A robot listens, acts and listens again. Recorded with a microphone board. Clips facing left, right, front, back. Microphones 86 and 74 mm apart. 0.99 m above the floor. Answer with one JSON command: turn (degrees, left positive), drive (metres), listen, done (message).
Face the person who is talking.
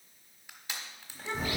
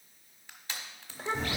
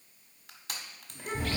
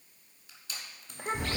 {"turn": -155}
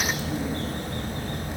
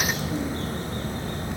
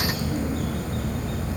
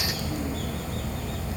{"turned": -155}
{"listen": true}
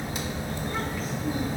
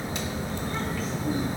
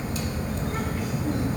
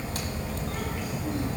{"listen": true}
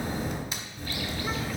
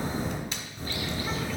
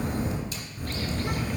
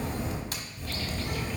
{"done": "Facing where the child speaking came from. I can't hear it now."}